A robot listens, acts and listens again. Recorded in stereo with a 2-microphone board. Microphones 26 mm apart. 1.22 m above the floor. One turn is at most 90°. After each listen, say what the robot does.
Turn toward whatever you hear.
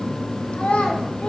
Turn 55° left.
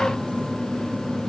Keep listening.
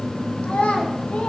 Turn 65° left.
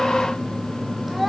Facing the child speaking.